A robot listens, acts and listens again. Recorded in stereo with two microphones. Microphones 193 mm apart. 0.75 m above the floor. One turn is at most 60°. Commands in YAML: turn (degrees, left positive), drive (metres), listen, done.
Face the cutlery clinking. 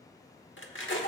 turn: 60
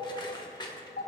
turn: 25
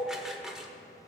done: "Found it: cutlery clinking, straight ahead, 1 to 2 m away."